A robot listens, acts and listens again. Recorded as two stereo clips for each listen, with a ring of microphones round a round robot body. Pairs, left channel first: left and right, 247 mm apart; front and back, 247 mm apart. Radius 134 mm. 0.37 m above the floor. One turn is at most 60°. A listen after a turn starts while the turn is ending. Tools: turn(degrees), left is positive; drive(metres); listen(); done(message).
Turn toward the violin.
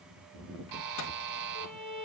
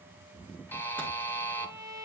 turn(degrees=-20)
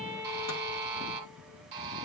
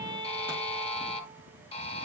done("Found it: a violin, straight ahead.")